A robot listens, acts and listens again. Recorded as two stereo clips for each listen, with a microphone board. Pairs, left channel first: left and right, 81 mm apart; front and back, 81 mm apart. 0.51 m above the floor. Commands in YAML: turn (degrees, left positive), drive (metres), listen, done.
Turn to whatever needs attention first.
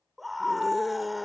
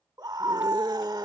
turn: 180
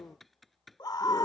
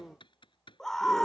turn: 80
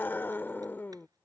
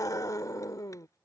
turn: 30
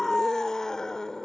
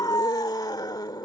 turn: 10
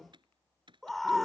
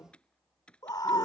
done: "Found it: a scream, straight ahead."